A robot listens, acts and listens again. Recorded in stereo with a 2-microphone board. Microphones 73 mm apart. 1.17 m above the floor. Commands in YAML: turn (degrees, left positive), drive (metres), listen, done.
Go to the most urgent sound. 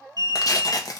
turn: -60
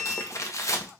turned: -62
turn: -30
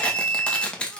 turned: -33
drive: 1.0
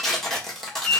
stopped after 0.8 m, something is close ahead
turn: 10
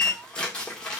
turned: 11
done: "I am next to the alarm."